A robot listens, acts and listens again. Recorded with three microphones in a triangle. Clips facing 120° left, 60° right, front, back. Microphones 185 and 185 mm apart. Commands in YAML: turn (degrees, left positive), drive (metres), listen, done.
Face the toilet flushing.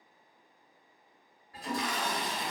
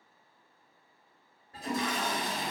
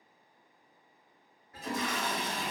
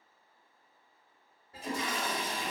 turn: -125
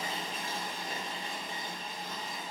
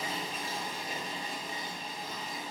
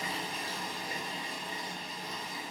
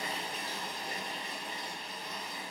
turn: -10
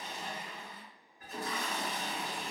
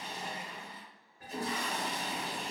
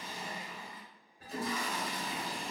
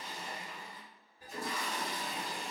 done: "Facing the toilet flushing."